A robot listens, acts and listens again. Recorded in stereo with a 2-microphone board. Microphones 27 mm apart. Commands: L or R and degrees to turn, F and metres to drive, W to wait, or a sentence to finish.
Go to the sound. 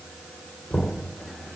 L75
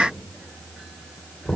L20
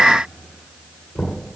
F1.0
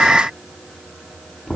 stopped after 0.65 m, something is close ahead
Something is in my way. I am facing the knocking but have not reached it.